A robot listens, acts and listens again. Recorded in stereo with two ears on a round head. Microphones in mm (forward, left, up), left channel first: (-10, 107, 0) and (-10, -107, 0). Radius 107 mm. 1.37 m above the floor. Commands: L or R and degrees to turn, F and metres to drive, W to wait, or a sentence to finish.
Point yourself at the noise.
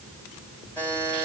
L30
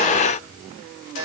R25
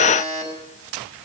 L20
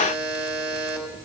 Facing the buzzer.